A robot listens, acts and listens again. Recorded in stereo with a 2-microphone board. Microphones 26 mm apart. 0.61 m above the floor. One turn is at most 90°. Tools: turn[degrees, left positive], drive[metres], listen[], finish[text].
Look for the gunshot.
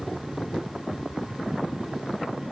Action: listen[]
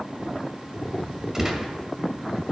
Thought: The gunshot: about 15° right or 165° right.
Action: turn[-15]
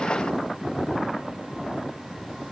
Action: listen[]
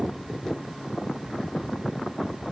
Action: finish[I heard a gunshot, but can't make it out now. It was about straight ahead or 150° right.]